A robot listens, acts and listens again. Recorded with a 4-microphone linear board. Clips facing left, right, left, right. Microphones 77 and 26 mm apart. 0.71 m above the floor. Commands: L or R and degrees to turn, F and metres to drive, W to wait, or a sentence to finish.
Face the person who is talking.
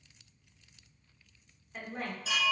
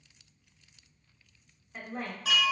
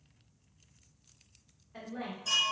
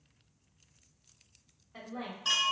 R30
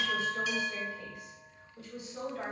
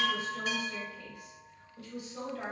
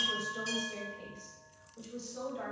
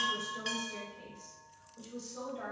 L25
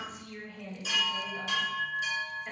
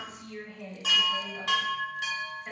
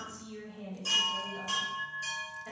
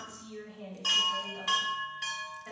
Facing the woman speaking.